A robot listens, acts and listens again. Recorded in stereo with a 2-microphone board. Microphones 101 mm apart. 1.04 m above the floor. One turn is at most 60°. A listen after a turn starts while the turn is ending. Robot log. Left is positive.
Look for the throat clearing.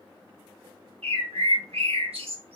cmd idle
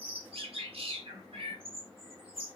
cmd idle
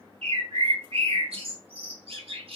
end: I can't make out throat clearing, only a bird.